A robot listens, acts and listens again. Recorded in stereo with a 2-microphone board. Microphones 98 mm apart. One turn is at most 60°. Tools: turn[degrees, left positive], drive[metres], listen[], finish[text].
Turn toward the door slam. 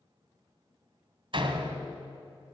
Thought: The door slam: about 60° right or 120° right.
Action: turn[-60]
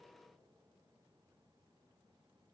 Action: listen[]
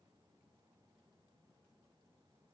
Action: finish[I heard a door slam, but can't make it out now. It was about straight ahead or 60° right.]